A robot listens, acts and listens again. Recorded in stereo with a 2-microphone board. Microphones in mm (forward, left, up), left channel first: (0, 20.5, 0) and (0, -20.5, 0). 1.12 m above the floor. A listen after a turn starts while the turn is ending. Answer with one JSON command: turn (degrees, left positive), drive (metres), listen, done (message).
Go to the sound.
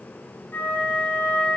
{"turn": 65}
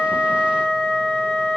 {"turn": 15}
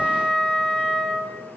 {"drive": 1.0}
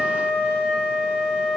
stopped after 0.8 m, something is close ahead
{"done": "I am next to the flute."}